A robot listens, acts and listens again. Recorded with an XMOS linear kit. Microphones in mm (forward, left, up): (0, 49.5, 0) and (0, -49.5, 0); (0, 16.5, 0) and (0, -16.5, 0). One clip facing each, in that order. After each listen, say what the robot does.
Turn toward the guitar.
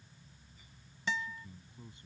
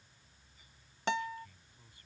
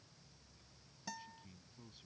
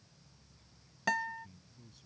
Turn 65° right.
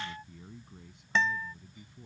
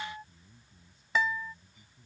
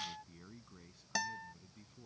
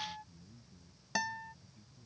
Turn 10° right.
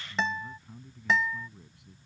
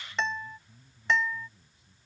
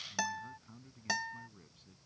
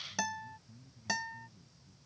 Facing the guitar.